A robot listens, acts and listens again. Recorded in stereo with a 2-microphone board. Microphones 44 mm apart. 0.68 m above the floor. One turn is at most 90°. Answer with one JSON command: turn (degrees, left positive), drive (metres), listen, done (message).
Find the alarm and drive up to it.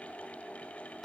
{"listen": true}
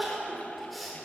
{"listen": true}
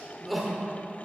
{"done": "I can't make out an alarm, only crying."}